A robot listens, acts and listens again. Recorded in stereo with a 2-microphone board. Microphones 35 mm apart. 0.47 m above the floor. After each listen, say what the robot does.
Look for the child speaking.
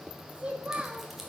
Turn 30° right.
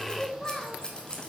Turn 15° left.
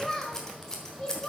Turn 25° left.
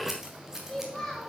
Turn 10° left.
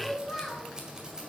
Facing the child speaking.